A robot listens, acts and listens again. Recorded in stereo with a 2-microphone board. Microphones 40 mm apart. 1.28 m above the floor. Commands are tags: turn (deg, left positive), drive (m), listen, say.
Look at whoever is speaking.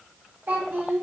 <turn deg="-45"/>
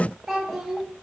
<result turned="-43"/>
<say>Found it: a child speaking, straight ahead.</say>